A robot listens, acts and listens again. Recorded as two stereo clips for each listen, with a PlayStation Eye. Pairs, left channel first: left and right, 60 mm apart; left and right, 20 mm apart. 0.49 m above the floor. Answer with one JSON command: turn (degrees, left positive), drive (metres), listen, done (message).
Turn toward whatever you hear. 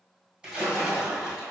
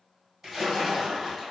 {"turn": -15}
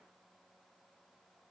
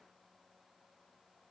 {"listen": true}
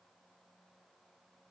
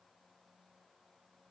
{"done": "I heard a splash, but can't make it out now. It was about straight ahead or 150° right."}